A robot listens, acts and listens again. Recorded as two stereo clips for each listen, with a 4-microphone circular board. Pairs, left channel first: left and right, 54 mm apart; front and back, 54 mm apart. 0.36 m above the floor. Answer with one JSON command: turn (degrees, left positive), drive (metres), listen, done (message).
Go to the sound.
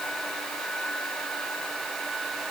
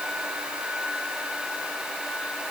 {"listen": true}
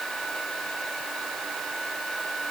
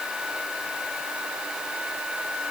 {"listen": true}
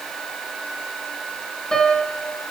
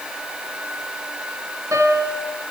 {"turn": 165}
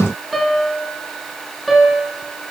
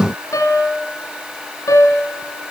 {"drive": 1.0}
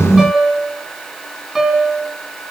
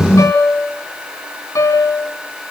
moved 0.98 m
{"drive": 1.0}
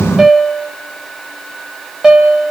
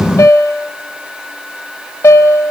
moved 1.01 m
{"turn": -15}
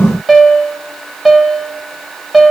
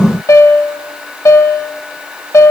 {"drive": 1.0}
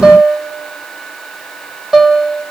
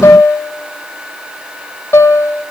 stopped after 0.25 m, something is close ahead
{"turn": -10}
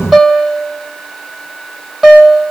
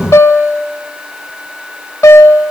{"done": "I am next to the piano."}